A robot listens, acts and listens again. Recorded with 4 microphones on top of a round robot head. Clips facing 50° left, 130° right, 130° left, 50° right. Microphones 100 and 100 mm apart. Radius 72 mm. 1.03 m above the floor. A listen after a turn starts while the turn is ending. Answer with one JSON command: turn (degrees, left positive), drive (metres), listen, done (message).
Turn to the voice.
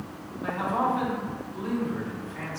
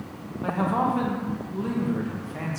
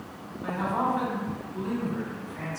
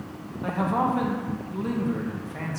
{"turn": -85}
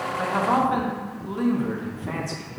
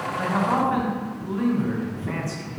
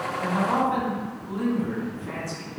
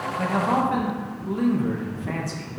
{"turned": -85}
{"turn": -20}
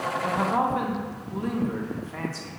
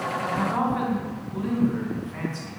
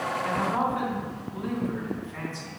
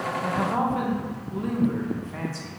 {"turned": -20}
{"done": "Found it: a man speaking, straight ahead."}